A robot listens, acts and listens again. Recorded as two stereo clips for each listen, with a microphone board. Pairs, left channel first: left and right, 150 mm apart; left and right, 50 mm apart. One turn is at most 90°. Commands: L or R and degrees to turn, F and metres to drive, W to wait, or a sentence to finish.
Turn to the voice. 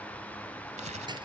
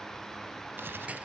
W
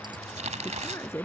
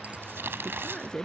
L15
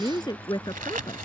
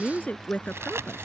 L30
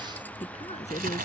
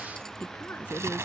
L90
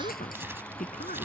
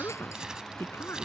L65
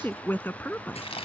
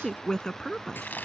L15
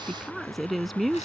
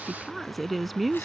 Facing the woman speaking.